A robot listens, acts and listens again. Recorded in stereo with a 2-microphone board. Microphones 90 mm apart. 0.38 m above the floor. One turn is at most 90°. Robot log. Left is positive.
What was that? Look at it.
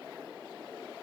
cmd idle
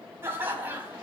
note: The laughter: about 15° right or 165° right.
cmd yaw -15
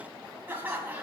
note: The laughter: about 15° right or 165° right.
cmd yaw -15
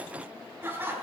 note: The laughter: about 20° right or 160° right.
cmd yaw -20
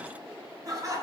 note: The laughter: about 35° right or 145° right.
cmd yaw -35
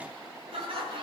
note: So it is at 120° right.
cmd yaw -90
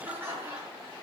note: The laughter is now 25° right.
cmd yaw -25
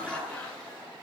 note: The laughter is now 10° left.
cmd yaw +10
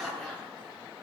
end: Found it: laughter, straight ahead, over 4 m away.